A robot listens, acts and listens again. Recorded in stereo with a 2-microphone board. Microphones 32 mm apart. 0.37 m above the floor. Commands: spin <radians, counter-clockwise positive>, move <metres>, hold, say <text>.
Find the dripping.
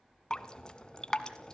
spin 0.44
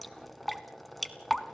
say Facing the dripping, 1 to 2 m away.